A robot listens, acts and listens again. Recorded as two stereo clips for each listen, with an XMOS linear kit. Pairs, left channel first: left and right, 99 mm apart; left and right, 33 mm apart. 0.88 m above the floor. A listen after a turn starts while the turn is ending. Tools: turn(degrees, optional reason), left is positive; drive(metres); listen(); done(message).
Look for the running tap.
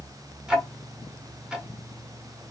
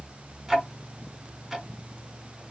listen()
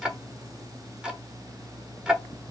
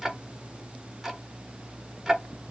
listen()
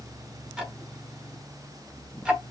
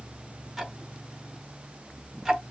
done("I can't make out a running tap, only ticking.")